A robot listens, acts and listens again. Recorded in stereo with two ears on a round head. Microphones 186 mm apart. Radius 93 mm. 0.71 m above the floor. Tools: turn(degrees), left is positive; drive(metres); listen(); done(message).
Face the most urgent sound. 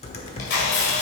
listen()
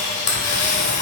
listen()
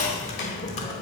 done("I can't make out anything urgent to turn to.")